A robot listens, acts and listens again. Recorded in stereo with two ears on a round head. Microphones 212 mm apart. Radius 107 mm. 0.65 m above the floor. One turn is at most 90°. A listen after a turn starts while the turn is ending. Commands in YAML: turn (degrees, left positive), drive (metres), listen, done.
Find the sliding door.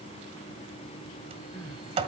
turn: -25
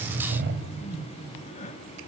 turn: -90
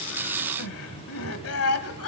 turn: -40
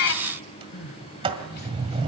turn: -25
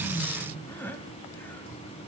listen: true
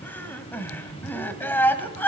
listen: true
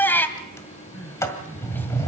turn: 10
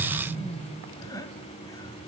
done: "Found it: a sliding door, straight ahead."